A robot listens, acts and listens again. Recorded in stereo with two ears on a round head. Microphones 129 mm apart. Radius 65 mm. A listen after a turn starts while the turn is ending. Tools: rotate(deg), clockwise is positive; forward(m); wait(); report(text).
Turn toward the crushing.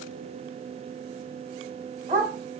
wait()
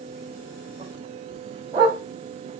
wait()
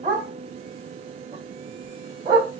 report("I can't make out crushing to turn to.")